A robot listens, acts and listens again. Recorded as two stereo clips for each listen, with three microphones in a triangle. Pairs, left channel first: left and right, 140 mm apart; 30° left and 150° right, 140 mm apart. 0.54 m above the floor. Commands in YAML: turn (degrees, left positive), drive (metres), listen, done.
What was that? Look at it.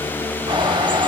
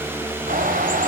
turn: -145
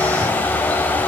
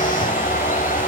turn: 10
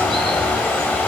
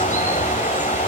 done: "Found it: a bird, straight ahead."